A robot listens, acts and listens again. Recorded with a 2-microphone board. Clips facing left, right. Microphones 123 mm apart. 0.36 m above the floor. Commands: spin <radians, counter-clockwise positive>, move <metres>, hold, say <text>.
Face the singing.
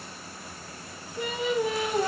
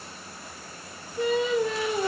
spin 0.52
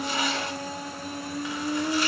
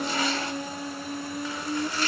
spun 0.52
spin 2.36
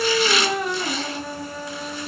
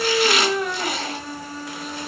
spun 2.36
say Facing the singing.